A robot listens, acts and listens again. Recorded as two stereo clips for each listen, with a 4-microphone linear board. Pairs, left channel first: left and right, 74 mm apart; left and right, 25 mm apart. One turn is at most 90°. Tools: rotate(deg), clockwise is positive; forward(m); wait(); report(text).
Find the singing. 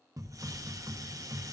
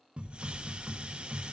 wait()
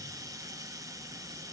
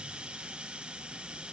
wait()
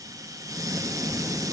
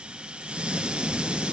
report("I can't make out singing, only a hiss.")